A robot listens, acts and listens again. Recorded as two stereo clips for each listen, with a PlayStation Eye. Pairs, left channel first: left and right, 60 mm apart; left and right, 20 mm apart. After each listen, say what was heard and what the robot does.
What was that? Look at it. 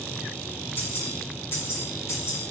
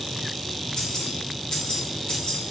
The keys jangling: about 50° left or 130° left. Turn 50° left.
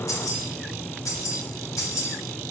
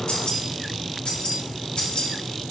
So it is at 60° left. Turn 60° left.
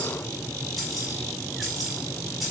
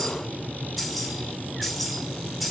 Facing the keys jangling, 2 to 4 m away.